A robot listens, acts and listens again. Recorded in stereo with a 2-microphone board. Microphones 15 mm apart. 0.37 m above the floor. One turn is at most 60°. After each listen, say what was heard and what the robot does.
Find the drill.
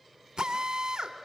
The drill: about 70° right or 110° right. Turn 60° right.
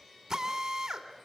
So it is at 35° right. Turn 35° right.
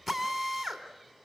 Facing the drill, 2 to 4 m away.